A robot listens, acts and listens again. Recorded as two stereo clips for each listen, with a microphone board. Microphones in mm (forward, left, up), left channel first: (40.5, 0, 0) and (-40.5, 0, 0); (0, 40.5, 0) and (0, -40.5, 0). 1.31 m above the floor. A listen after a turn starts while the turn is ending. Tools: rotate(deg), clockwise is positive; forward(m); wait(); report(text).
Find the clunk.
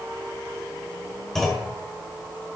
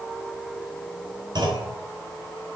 rotate(85)
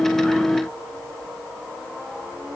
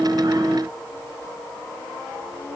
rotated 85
report("I heard a clunk from this way, but can't make it out now.")